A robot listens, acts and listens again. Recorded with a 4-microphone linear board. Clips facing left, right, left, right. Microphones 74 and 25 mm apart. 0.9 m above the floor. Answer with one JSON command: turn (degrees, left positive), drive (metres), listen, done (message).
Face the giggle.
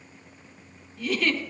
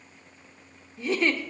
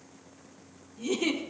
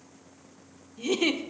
{"turn": -25}
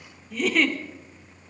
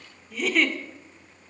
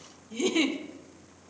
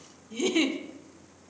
{"done": "Found it: a giggle, straight ahead, 1 to 2 m away."}